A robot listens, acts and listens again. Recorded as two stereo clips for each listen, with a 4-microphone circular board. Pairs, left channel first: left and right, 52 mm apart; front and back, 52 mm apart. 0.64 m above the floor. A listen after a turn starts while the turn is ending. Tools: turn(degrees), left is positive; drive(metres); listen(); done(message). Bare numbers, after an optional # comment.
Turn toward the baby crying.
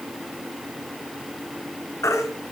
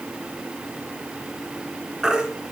# The baby crying: 100° left.
turn(100)
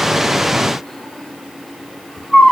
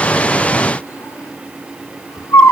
done("Found it: a baby crying, straight ahead.")